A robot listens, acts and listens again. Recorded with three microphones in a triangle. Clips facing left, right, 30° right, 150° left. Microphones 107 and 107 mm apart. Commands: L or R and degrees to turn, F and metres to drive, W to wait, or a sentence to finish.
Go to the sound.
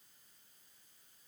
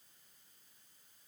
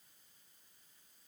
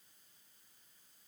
W
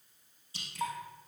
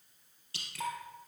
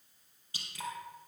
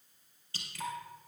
R105
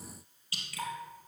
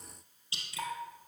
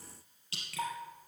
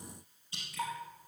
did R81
R25
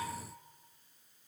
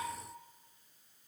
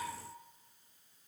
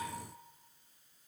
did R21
W
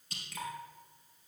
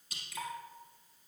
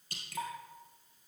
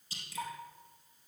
F1.0
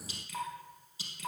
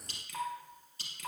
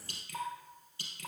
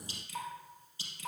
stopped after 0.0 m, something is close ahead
Blocked. The dripping is further on, straight ahead.